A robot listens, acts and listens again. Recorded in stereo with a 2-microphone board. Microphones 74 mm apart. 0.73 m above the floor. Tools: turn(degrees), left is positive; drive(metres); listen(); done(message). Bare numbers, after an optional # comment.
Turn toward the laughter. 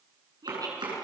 # The laughter: about 55° right or 125° right.
turn(-55)
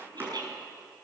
# So it is at 65° right.
turn(-65)
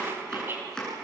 # The laughter is now 30° right.
turn(-30)
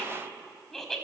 done("Facing the laughter.")